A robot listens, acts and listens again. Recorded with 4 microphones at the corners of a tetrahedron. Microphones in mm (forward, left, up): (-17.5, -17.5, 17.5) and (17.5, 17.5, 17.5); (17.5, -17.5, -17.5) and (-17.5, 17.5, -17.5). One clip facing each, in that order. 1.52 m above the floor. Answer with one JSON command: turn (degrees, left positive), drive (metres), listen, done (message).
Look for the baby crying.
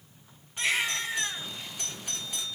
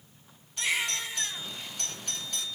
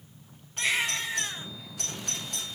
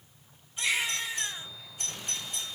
{"turn": -90}
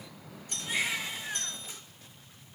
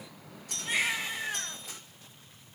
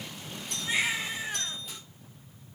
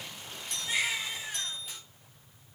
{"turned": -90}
{"turn": 15}
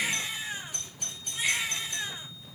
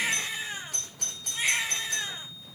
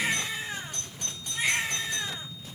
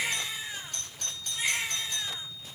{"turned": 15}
{"done": "Found it: a baby crying, straight ahead, 2 to 4 m away."}